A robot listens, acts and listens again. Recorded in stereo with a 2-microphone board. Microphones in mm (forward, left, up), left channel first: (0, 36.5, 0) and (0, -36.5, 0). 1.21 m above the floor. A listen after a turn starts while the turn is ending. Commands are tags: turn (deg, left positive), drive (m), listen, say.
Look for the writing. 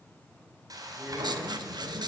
<turn deg="-90"/>
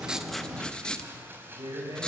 <turn deg="10"/>
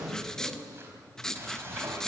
<say>Facing the writing.</say>